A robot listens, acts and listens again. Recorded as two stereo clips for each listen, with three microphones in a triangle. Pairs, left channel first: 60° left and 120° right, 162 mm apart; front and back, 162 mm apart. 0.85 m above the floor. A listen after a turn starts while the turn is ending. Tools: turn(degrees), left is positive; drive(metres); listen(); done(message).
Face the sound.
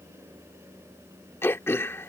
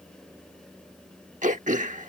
turn(degrees=135)
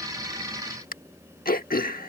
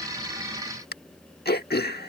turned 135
turn(degrees=25)
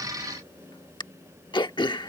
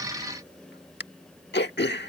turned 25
done("Found it: throat clearing, straight ahead.")